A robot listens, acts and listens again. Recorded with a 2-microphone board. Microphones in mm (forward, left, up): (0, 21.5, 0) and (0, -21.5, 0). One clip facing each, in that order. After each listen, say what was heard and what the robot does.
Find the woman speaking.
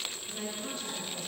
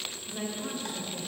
Turn 30° right.
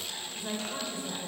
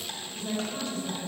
So it is at 20° left. Turn 20° left.
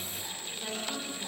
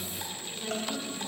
The woman speaking is now 10° left. Turn 10° left.
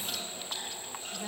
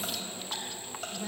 The woman speaking is now 10° left. Turn 10° left.
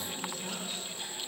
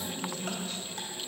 The woman speaking is now 10° left. Turn 10° left.
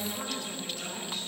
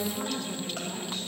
Found it: a woman speaking, straight ahead, 2 to 4 m away.